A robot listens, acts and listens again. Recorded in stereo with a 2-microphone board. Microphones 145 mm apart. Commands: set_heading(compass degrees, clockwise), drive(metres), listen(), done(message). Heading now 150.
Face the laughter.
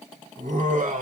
set_heading(210)
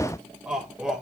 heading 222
done("Found it: laughter, straight ahead.")